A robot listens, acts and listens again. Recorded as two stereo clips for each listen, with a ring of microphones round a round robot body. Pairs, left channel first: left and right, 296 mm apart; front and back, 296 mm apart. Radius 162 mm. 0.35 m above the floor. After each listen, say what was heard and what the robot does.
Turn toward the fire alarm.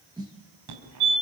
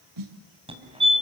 The fire alarm: 110° right. Turn 110° right.
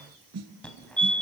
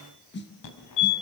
Facing the fire alarm, over 4 m away.